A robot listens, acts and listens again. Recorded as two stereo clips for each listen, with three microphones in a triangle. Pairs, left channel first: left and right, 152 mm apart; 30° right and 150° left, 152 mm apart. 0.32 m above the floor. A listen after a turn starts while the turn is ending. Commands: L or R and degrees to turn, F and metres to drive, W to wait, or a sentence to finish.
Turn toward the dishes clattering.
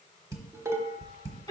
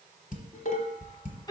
R20
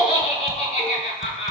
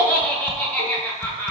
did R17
W
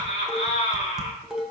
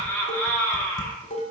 Facing the dishes clattering, 1 to 2 m away.